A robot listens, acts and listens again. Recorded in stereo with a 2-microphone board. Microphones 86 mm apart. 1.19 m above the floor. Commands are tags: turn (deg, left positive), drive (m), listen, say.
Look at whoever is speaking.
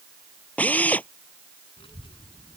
<turn deg="90"/>
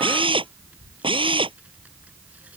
<turn deg="-15"/>
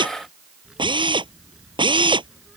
<say>Found it: a child speaking, straight ahead.</say>